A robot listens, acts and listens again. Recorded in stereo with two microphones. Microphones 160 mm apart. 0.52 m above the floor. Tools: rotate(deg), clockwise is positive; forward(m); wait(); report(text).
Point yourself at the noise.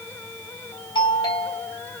rotate(-25)
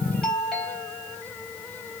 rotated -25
report("Found it: a doorbell, straight ahead, over 4 m away.")